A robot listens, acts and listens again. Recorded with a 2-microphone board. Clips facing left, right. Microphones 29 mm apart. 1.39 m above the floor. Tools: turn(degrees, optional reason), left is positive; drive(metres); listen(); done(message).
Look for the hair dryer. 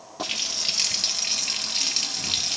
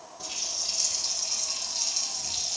listen()
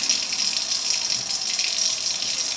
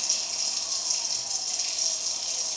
listen()
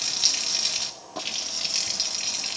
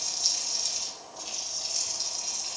done("I can't make out a hair dryer, only a running tap.")